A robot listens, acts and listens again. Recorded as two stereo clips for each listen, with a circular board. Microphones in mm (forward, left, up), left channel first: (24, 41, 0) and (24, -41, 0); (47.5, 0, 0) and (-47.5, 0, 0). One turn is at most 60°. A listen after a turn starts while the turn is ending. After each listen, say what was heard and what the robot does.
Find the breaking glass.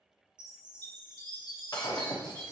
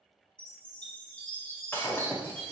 The breaking glass: 65° left. Turn 60° left.
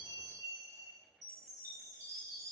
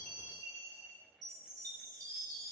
I heard breaking glass from this way, but can't make it out now.